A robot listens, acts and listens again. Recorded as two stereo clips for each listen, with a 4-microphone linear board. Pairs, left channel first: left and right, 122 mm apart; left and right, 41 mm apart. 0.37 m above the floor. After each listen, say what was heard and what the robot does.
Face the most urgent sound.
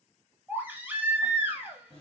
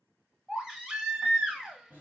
The baby crying: about 15° right or 165° right. Turn 15° right.
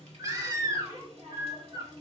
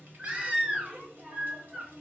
So it is at 150° right. Turn 150° right.
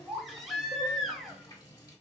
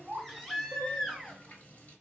Facing the baby crying.